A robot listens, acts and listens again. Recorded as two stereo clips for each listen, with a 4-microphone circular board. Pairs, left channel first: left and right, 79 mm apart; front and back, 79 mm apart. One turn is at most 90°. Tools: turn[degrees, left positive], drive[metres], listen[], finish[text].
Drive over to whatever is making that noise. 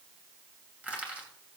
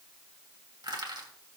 Thought: The crushing: 165° right.
Action: turn[-90]
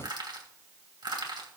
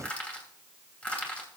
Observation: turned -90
Thought: The crushing is now 75° right.
Action: turn[-75]
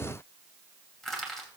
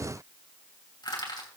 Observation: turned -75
Action: drive[1.0]
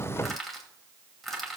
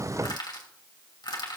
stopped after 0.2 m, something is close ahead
Action: finish[Blocked. The crushing is further on, straight ahead.]